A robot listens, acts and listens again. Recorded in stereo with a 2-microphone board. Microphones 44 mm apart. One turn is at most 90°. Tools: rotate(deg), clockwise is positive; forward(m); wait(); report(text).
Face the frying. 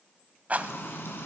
rotate(-70)
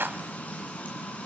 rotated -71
rotate(-40)
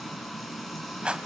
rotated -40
report("Found it: frying, straight ahead, 2 to 4 m away.")